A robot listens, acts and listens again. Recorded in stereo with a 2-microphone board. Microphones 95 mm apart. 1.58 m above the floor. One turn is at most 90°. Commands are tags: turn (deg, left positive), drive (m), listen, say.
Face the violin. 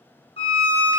<turn deg="70"/>
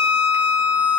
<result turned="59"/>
<turn deg="50"/>
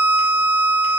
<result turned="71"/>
<turn deg="-20"/>
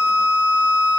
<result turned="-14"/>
<turn deg="-10"/>
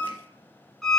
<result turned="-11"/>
<say>Facing the violin, under 1 m away.</say>